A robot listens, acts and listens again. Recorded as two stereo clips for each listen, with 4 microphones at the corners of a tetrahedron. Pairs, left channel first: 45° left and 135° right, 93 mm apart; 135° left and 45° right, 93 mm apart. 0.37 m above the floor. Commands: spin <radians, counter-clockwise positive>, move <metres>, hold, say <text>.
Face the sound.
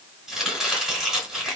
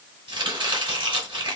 spin -0.79
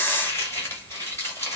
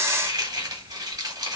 spin -0.17
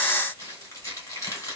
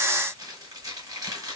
say Facing the chopping, 1 to 2 m away.